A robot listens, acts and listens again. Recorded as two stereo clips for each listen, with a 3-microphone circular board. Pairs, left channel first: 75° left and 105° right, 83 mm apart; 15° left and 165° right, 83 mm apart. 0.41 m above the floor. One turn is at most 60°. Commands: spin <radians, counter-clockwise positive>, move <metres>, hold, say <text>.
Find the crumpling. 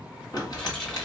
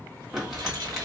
spin 1.05
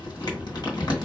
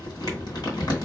spin 0.87
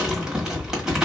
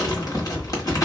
spin -0.44
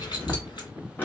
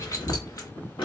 spin 0.17
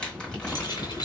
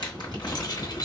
say Facing the crumpling.